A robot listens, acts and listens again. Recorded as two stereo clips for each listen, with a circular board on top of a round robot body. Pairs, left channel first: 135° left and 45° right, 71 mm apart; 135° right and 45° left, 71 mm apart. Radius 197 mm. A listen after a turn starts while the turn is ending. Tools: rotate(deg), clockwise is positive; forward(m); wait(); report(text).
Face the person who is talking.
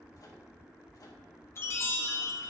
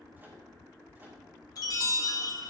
wait()
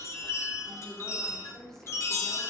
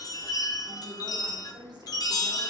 rotate(-55)
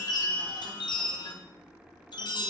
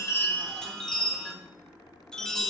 wait()
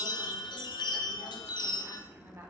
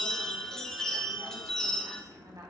rotate(-10)
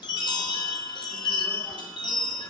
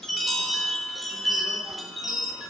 wait()
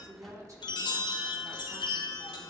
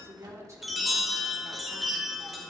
report("Found it: a woman speaking, straight ahead.")